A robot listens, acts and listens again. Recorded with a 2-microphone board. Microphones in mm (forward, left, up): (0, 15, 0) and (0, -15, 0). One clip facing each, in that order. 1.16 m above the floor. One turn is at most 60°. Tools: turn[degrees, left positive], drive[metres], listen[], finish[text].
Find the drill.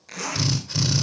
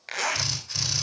Action: turn[30]
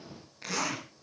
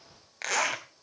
Action: listen[]
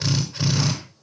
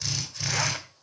Thought: So it is at 145° left.
Action: turn[60]
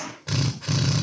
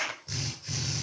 Thought: The drill is now 95° left.
Action: turn[60]
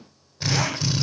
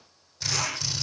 Thought: The drill is now 20° left.
Action: turn[20]
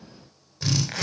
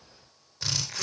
Action: finish[Found it: a drill, straight ahead, over 4 m away.]